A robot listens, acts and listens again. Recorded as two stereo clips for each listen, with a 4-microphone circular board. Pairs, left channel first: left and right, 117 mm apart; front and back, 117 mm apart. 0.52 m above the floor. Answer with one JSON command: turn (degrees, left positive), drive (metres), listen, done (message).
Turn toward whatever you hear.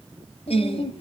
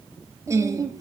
{"turn": 120}
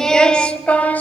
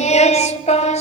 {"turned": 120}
{"turn": 15}
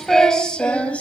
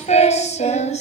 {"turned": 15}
{"turn": 10}
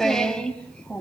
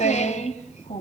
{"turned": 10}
{"turn": 10}
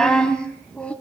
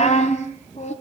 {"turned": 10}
{"turn": 10}
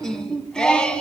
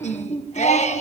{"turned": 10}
{"turn": 10}
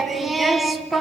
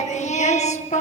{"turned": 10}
{"done": "Facing the singing, 2 to 4 m away."}